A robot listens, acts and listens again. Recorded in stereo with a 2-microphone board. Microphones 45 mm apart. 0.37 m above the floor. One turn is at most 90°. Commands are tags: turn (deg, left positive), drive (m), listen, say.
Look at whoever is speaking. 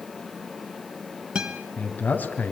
<turn deg="40"/>
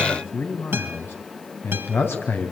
<turn deg="90"/>
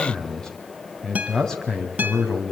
<turn deg="10"/>
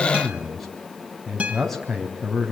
<say>Facing the man speaking.</say>